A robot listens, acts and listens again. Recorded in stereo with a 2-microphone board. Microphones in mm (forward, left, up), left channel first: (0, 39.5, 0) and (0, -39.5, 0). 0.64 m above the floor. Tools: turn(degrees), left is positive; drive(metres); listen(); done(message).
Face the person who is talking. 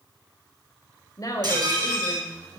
turn(degrees=45)
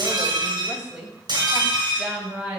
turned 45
turn(degrees=-15)
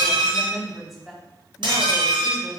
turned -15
done("Facing the woman speaking, 2 to 4 m away.")